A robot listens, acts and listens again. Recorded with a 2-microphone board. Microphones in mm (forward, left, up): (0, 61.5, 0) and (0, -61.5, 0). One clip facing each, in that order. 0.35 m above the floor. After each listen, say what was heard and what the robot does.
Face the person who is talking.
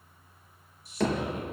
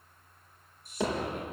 The man speaking: about 55° right or 125° right. Turn 55° right.
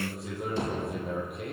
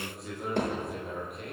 Found it: a man speaking, straight ahead.